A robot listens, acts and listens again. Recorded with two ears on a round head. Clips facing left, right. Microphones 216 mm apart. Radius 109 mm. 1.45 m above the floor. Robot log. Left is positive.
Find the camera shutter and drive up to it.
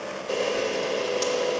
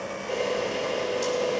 note: The camera shutter: about 60° left or 120° left.
cmd yaw +60
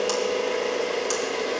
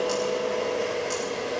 note: So it is at 60° left.
cmd yaw +60
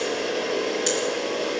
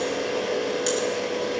cmd fwd 1.0
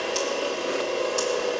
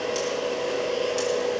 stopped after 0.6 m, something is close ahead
end: Blocked. The camera shutter is further on, straight ahead.